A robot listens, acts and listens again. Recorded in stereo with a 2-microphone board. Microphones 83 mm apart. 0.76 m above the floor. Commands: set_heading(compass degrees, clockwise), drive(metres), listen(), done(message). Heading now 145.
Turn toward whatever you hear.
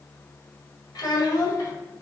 set_heading(100)
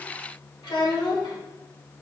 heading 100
set_heading(345)
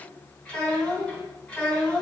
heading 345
set_heading(335)
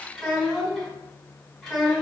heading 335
done("Facing the child speaking, 2 to 4 m away.")